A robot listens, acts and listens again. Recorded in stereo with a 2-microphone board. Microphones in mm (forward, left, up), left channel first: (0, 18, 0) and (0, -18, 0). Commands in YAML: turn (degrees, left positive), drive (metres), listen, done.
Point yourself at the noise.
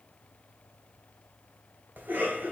turn: -65
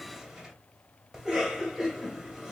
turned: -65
turn: -20
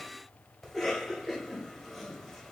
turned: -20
done: "Facing the cough, 1 to 2 m away."